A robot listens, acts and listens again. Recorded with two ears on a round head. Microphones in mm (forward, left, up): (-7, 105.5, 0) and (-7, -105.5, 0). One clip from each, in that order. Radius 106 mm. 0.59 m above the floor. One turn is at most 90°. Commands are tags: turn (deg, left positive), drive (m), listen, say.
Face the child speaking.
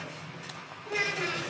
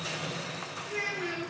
<turn deg="50"/>
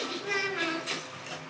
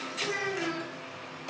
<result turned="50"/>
<turn deg="75"/>
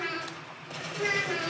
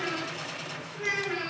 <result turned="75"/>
<turn deg="10"/>
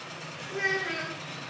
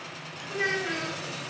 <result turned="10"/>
<say>Facing the child speaking, over 4 m away.</say>